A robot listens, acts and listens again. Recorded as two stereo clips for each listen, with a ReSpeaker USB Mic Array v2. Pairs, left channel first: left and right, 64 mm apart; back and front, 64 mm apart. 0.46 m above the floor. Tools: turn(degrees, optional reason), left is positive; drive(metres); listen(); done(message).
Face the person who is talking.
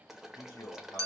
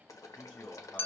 turn(degrees=110, reason="The man speaking: 110° left.")
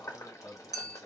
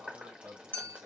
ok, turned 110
done("Found it: a man speaking, straight ahead.")